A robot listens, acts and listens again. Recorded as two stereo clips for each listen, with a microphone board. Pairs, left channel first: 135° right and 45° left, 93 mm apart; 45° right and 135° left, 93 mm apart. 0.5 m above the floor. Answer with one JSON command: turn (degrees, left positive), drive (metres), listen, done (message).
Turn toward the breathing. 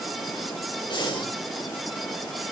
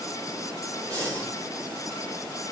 {"turn": -170}
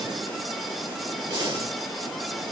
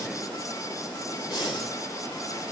{"done": "Found it: breathing, straight ahead."}